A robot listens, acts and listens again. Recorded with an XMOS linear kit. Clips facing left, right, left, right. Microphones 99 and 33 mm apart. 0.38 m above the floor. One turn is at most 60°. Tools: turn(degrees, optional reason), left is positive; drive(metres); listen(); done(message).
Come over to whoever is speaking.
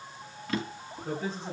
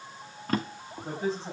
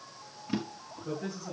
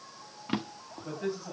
turn(degrees=-35, reason="The man speaking: about 35° right or 145° right.")
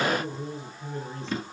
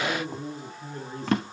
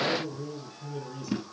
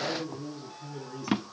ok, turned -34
drive(metres=1.0)
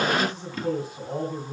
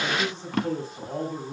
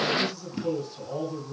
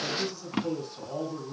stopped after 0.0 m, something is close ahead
done("Blocked. The man speaking is further on, straight ahead.")